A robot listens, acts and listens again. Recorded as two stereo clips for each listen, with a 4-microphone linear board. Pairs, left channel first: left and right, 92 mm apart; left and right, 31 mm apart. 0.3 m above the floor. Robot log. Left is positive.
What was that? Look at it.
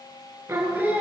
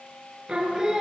note: The singing: about 20° right or 160° right.
cmd yaw -20
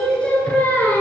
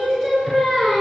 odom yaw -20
note: So it is at 25° left.
cmd yaw +25
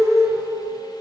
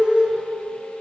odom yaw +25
end: Facing the singing, 1 to 2 m away.